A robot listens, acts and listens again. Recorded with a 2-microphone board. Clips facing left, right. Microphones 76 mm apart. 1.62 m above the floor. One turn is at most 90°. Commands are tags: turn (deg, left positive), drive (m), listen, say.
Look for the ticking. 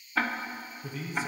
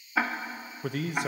<turn deg="-30"/>
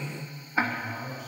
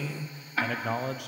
<turn deg="20"/>
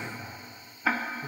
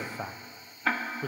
<say>Facing the ticking.</say>